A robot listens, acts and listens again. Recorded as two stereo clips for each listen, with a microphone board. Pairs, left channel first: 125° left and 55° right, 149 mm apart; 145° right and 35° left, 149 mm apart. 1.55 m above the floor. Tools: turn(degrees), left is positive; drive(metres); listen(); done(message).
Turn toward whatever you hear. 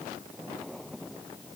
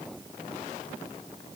listen()
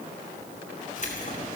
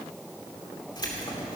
turn(degrees=155)
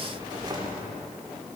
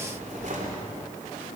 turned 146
done("Found it: keys jangling, straight ahead, 2 to 4 m away.")